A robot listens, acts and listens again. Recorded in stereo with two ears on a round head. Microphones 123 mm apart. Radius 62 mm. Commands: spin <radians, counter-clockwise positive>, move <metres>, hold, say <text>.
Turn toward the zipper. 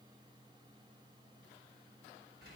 hold
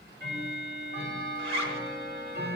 spin -0.79
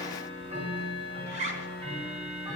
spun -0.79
spin -1.40
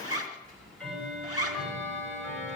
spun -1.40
spin -0.52
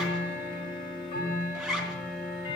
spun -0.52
say Facing the zipper.